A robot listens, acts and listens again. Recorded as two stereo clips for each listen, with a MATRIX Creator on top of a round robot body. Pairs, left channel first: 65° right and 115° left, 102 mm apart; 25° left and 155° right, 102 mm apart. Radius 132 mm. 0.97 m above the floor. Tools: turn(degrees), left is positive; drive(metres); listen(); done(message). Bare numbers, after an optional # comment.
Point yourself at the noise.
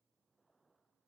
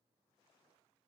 listen()
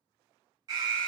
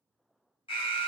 # The alarm: 60° left.
turn(60)
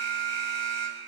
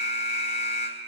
done("Found it: an alarm, straight ahead.")